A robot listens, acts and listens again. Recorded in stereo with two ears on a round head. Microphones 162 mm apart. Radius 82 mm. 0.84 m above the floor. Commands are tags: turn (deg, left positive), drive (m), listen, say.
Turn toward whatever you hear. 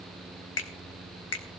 <turn deg="70"/>
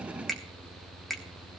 <say>Found it: a finger snap, straight ahead.</say>